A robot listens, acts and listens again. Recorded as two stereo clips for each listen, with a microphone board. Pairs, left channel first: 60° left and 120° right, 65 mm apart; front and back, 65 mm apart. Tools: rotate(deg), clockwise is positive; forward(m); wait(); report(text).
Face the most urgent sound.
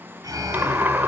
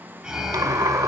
rotate(100)
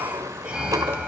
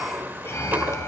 rotate(50)
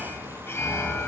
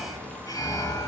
rotate(-10)
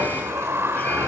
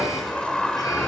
report("Found it: an alarm, straight ahead, 2 to 4 m away.")